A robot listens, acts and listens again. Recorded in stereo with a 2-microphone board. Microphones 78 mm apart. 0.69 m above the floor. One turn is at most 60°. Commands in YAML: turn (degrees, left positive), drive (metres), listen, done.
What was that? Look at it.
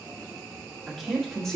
turn: 30
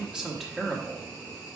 turn: 30
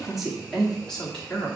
turn: 30
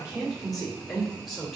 turn: 30
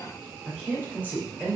turn: -25
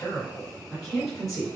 done: "Facing the woman speaking, 2 to 4 m away."